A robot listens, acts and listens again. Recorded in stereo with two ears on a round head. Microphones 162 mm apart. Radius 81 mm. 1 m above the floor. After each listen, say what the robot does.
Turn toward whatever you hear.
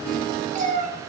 Turn 40° right.
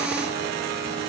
Keep listening.
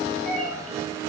Found it: a cat meowing, straight ahead.